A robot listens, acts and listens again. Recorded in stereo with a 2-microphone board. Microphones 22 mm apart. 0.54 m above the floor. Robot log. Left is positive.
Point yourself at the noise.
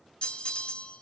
note: The bell: about 60° left or 120° left.
cmd yaw +60
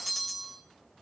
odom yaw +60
note: So it is at 10° left.
cmd yaw +10
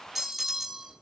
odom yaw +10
end: Facing the bell.